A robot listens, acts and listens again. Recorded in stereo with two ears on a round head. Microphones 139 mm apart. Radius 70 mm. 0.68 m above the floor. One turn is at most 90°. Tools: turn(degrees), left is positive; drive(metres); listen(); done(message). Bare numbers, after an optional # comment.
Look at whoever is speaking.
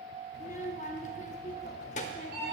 # The child speaking: about 45° left or 135° left.
turn(45)
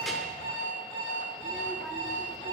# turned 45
done("Facing the child speaking, under 1 m away.")